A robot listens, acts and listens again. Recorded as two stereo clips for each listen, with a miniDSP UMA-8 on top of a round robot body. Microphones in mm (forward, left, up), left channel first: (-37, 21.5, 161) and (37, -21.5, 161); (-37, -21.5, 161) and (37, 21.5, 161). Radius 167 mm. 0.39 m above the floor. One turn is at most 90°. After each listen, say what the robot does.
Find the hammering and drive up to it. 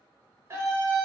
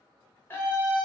Keep listening.
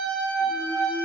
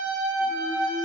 Keep listening.
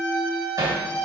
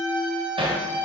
Turn 15° left.
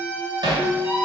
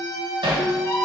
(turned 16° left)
Drive 1.0 m forward.
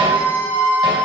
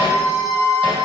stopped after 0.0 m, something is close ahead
Keep listening.
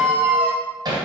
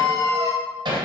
Something is in my way. I am facing the hammering but have not reached it.